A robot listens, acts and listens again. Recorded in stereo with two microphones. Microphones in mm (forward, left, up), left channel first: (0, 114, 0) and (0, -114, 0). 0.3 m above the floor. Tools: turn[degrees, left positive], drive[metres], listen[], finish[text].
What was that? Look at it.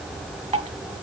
Thought: The dripping: about 30° right or 150° right.
Action: turn[-30]
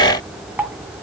Thought: So it is at 10° right.
Action: turn[-10]
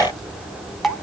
Action: finish[Found it: dripping, straight ahead, 1 to 2 m away.]